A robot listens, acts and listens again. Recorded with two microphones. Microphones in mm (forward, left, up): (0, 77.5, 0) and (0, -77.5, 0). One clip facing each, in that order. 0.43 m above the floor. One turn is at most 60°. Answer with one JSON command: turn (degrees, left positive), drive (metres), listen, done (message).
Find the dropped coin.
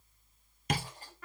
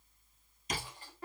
{"turn": 40}
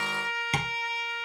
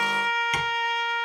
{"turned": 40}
{"listen": true}
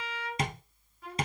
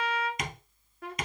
{"done": "I heard a dropped coin, but can't make it out now. It was about straight ahead or 100° left."}